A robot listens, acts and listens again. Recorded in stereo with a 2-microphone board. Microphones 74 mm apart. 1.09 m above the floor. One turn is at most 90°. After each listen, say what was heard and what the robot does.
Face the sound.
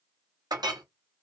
The clink: about 65° right or 115° right. Turn 65° right.
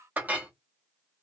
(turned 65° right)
So it is at 25° right. Turn 25° right.
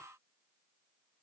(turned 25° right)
Keep listening.
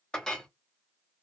The clink is now 10° left. Turn 10° left.
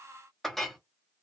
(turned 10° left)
Found it: a clink, straight ahead.